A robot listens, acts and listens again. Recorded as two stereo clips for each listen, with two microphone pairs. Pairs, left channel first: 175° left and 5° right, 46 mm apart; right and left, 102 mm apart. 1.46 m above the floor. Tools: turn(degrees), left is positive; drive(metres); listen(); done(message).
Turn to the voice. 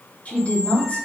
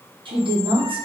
turn(degrees=115)
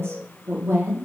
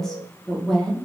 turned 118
done("Found it: a woman speaking, straight ahead.")